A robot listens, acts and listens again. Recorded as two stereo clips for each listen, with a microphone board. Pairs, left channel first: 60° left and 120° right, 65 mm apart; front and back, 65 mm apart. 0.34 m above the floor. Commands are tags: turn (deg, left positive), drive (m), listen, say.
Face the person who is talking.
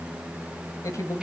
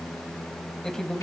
<turn deg="80"/>
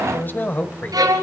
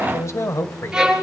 <turn deg="15"/>
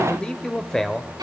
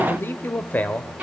<turn deg="-10"/>
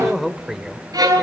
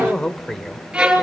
<turn deg="-60"/>
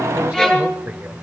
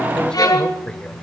<turn deg="-65"/>
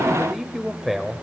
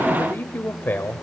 <turn deg="-30"/>
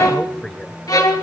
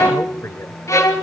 <say>Facing the man speaking.</say>